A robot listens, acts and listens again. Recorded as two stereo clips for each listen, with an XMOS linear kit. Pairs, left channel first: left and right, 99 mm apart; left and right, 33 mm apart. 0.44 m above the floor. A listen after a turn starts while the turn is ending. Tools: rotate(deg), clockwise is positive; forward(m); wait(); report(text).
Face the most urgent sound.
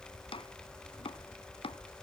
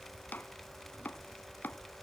wait()
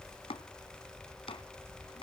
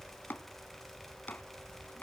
wait()
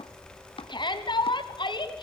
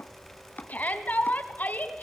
rotate(-60)
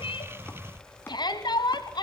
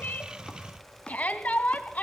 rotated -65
rotate(-55)
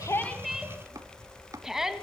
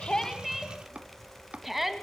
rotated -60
report("Facing the shout, 2 to 4 m away.")